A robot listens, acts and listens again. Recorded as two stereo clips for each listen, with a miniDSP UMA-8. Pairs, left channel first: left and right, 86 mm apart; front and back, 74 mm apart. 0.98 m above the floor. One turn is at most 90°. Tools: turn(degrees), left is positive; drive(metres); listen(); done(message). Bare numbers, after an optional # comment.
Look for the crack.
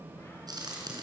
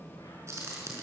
# The crack: 130° right.
turn(-90)
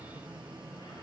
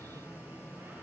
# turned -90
# Nothing new. It was at 40° right.
turn(-40)
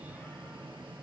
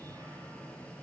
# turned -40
done("I heard a crack from this way, but can't make it out now.")